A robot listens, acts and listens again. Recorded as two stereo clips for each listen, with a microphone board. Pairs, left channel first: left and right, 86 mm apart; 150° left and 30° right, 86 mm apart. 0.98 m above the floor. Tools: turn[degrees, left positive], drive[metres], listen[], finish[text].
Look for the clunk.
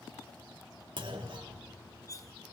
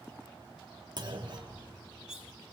Thought: The clunk: 65° right.
Action: turn[-65]
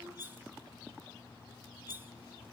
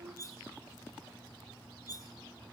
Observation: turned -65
Action: finish[I heard a clunk from this way, but can't make it out now.]